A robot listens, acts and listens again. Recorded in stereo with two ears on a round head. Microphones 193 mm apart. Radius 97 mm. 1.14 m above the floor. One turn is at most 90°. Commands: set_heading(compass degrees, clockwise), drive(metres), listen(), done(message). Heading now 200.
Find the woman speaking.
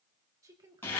set_heading(215)
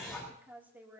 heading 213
set_heading(243)
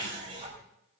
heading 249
listen()
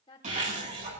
set_heading(224)
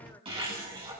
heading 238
set_heading(228)
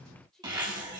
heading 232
done("Facing the woman speaking, over 4 m away.")